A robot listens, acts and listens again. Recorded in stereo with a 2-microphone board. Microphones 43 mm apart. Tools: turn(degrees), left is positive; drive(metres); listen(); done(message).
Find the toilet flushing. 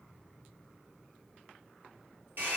listen()
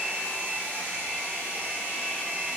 listen()
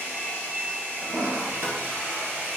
turn(degrees=-90)
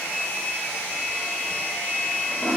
done("Found it: a toilet flushing, straight ahead, 1 to 2 m away.")